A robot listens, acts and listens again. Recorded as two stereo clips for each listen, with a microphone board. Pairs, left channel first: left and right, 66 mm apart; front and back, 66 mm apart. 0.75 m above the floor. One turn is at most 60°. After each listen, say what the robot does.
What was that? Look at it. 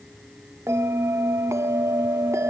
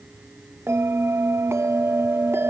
Turn 60° right.
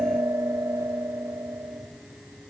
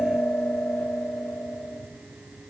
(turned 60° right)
Turn 60° right.
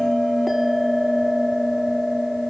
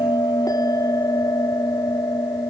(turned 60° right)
Facing the bell, 1 to 2 m away.